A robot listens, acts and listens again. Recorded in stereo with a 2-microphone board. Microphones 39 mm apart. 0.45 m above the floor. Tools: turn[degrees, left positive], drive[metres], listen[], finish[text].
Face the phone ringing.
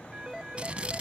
Action: turn[-30]
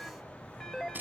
Thought: So it is at 15° left.
Action: turn[15]
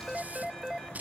Action: finish[Facing the phone ringing.]